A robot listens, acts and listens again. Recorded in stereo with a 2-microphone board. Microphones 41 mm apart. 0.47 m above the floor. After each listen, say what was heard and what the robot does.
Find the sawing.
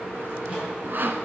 The sawing: about 50° right or 130° right. Turn 50° right.
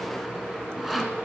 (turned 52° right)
Facing the sawing.